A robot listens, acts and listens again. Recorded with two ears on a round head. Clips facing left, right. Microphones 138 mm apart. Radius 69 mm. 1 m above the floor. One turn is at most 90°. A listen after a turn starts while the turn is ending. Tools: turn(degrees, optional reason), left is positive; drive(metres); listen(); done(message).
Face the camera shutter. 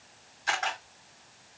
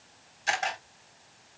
turn(degrees=-30, reason="The camera shutter: about 30° right or 150° right.")
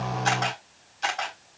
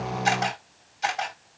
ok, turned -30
done("Facing the camera shutter.")